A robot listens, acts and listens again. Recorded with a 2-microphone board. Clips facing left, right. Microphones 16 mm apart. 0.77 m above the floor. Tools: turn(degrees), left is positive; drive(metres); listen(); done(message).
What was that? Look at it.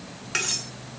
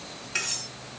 turn(degrees=70)
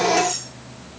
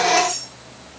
done("Facing the cutlery clinking, 2 to 4 m away.")